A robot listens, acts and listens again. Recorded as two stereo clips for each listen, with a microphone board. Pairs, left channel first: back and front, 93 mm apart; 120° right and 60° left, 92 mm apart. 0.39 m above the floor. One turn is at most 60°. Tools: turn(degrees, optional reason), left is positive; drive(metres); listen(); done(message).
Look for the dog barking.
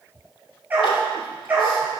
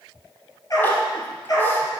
turn(degrees=-60, reason="The dog barking: 75° right.")
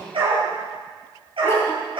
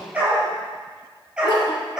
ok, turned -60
turn(degrees=-25, reason="The dog barking is now 25° right.")
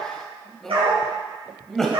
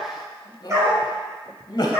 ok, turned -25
done("Facing the dog barking.")